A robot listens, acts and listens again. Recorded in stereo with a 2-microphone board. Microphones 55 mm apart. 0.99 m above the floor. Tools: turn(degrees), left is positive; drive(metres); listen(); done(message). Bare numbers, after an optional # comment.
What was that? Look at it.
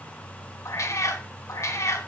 # The cat meowing: about 65° left or 115° left.
turn(65)
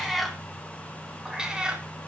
# So it is at 15° right.
turn(-15)
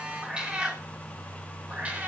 # The cat meowing is now 25° right.
turn(-25)
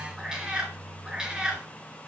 # The cat meowing is now 15° right.
turn(-15)
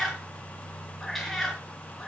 done("Facing the cat meowing.")